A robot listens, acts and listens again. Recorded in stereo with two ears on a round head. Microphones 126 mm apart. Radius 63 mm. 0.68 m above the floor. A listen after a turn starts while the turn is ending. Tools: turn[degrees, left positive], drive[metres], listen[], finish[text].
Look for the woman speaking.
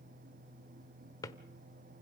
Action: listen[]
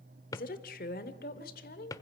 Thought: The woman speaking: about 70° left or 110° left.
Action: turn[70]
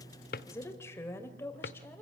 Thought: So it is at 15° left.
Action: turn[15]
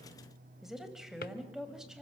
Action: finish[Facing the woman speaking, over 4 m away.]